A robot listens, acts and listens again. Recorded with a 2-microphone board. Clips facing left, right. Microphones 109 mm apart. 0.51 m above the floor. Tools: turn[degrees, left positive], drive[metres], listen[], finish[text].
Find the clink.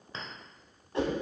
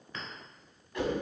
Thought: The clink: about 25° left or 155° left.
Action: turn[25]
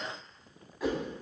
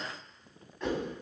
Action: listen[]
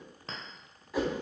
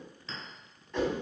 Thought: So it is at 130° left.
Action: turn[130]
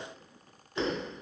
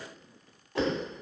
Action: listen[]
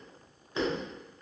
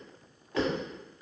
Thought: The clink is now 25° left.
Action: turn[25]
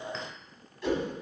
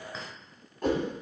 Action: listen[]
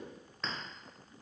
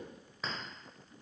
Action: finish[Facing the clink.]